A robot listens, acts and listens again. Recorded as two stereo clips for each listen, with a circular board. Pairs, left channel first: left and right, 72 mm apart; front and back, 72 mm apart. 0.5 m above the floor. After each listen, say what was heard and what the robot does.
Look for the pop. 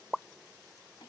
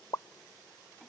The pop: 10° left. Turn 10° left.
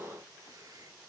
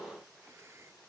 I heard a pop from this way, but can't make it out now.